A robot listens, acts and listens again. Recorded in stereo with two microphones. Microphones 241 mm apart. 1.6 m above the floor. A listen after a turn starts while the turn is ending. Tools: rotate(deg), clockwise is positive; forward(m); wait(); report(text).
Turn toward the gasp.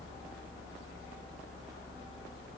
wait()
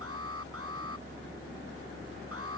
wait()
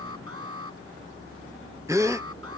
rotate(30)
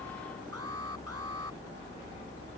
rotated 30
wait()
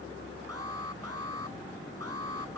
report("I heard a gasp, but can't make it out now. It was about 15° left or 135° right.")